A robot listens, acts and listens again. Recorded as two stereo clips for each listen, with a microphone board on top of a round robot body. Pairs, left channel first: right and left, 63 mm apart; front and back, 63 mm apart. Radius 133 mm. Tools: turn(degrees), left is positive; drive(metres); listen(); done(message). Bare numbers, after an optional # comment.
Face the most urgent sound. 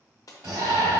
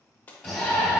# The shout: 95° left.
turn(95)
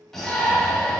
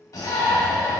done("Facing the shout, 1 to 2 m away.")